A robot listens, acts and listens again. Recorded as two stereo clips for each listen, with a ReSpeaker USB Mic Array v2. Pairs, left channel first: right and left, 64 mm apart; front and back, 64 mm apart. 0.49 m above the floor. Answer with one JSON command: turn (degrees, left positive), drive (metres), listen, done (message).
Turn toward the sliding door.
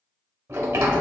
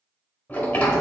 {"turn": 65}
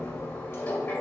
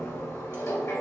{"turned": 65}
{"turn": -25}
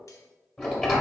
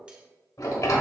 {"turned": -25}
{"done": "Facing the sliding door."}